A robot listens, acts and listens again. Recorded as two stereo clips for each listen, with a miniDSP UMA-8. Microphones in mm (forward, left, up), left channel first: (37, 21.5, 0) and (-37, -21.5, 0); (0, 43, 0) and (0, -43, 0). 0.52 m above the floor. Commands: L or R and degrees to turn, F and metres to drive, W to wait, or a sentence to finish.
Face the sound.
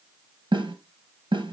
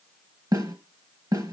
R130
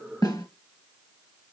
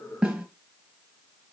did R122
Found it: a snare drum, straight ahead, 1 to 2 m away.